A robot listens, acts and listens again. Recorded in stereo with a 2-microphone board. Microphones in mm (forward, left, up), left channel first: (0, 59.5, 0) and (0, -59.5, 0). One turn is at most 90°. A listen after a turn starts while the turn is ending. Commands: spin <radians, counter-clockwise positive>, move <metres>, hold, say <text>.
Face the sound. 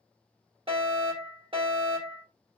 spin -0.87
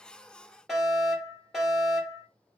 say Found it: a fire alarm, straight ahead.